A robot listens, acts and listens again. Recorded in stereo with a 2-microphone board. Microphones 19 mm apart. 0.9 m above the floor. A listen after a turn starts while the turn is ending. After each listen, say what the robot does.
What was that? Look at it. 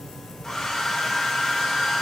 Turn 20° left.
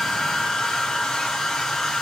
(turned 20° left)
Turn 140° left.
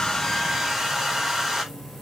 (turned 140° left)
Turn 20° right.
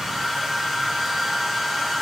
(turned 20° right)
Facing the hair dryer, over 4 m away.